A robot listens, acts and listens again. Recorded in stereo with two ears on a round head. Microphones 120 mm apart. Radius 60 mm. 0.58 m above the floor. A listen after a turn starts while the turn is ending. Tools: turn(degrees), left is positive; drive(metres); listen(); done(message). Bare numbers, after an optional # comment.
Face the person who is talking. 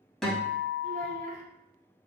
# The child speaking: about 55° right or 125° right.
turn(-55)
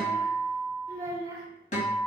# So it is at 30° right.
turn(-30)
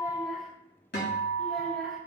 listen()
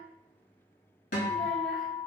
listen()
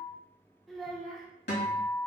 done("Facing the child speaking, 1 to 2 m away.")